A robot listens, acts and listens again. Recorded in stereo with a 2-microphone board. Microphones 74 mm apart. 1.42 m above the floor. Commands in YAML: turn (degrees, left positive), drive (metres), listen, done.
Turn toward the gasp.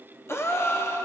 turn: 35
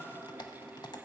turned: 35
listen: true
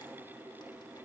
done: "I heard a gasp, but can't make it out now. It was about straight ahead or 110° left."